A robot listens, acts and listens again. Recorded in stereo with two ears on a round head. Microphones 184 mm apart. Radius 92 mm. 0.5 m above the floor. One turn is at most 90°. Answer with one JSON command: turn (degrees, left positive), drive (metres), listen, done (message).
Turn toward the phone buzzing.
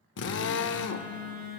{"turn": -55}
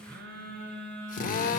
{"turn": -60}
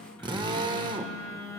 {"turn": 15}
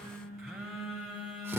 {"done": "Found it: a phone buzzing, straight ahead."}